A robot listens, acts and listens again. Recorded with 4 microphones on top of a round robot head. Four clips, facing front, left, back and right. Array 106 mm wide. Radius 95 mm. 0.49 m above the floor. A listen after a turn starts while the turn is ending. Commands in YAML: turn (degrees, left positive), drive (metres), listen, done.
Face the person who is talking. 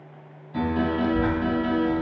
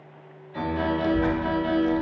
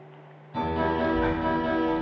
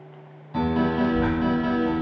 turn: 90
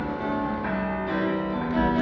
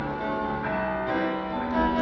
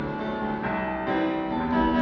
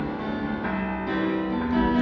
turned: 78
turn: 10
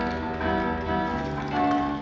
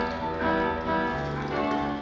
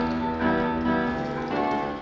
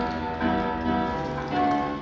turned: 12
done: "Facing the child speaking."